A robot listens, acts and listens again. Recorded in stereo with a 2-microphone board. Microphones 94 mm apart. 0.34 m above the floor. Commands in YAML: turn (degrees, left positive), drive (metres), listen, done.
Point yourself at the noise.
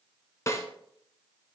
turn: 35
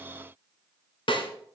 turn: 110
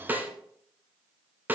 turn: -20
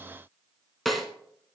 done: "Found it: a snare drum, straight ahead, 1 to 2 m away."